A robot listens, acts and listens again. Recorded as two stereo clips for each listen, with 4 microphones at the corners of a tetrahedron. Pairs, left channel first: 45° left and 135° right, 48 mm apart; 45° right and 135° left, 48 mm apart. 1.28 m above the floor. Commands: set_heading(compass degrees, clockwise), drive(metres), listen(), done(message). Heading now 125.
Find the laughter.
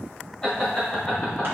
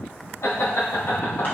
set_heading(145)
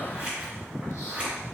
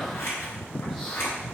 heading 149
listen()
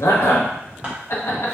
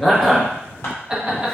set_heading(79)
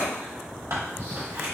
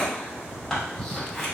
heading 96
set_heading(81)
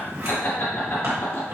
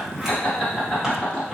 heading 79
set_heading(54)
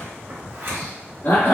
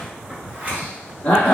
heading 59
done("Facing the laughter.")